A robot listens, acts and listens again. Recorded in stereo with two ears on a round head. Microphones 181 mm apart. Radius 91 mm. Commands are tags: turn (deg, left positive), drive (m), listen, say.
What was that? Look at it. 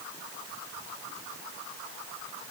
<listen/>
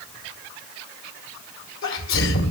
<turn deg="70"/>
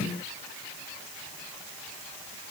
<listen/>
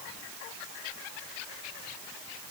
<say>I heard a sneeze, but can't make it out now. It was about straight ahead or 40° left.</say>